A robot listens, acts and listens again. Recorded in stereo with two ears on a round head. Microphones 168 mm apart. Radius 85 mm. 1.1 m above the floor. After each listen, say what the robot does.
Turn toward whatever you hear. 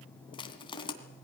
Turn 25° left.
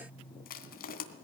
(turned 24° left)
Turn 125° left.
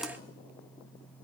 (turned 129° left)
Keep listening.
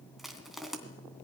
Found it: crushing, straight ahead, 2 to 4 m away.